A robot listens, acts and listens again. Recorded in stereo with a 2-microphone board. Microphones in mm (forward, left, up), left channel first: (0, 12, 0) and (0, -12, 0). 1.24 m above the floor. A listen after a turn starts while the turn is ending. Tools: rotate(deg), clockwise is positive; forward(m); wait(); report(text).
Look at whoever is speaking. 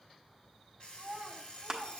rotate(55)
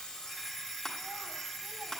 wait()
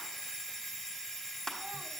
wait()
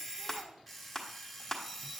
report("I heard a child speaking, but can't make it out now. It was about straight ahead or 70° right.")